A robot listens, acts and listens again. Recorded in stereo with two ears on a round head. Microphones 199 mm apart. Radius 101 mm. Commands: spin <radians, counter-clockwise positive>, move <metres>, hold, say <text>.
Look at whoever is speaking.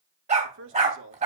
spin -1.05
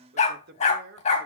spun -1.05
spin -0.87
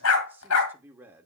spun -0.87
spin -0.17
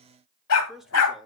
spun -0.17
say Found it: a man speaking, straight ahead, 1 to 2 m away.